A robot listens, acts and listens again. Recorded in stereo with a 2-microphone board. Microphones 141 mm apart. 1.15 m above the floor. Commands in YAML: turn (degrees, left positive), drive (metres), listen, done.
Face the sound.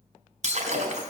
turn: -60
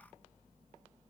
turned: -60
listen: true
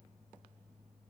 done: "I heard breaking glass, but can't make it out now. It was about straight ahead or 60° right."